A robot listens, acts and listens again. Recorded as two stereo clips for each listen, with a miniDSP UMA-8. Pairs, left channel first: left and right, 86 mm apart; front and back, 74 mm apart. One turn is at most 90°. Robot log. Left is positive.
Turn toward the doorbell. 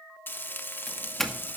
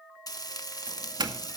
note: The doorbell: 175° left.
cmd yaw +90
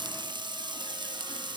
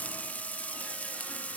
note: Nothing new. It was at 85° left.
cmd yaw +85
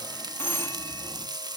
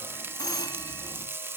note: The doorbell is now 30° left.
cmd yaw +30
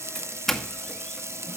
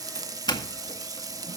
end: Facing the doorbell.